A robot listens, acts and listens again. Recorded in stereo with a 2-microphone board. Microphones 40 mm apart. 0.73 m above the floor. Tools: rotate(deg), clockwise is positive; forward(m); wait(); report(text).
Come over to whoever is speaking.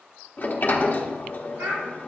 rotate(90)
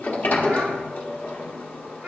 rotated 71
rotate(20)
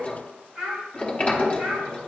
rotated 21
forward(1.0)
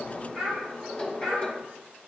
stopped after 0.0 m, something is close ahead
report("Blocked. The child speaking is further on, straight ahead.")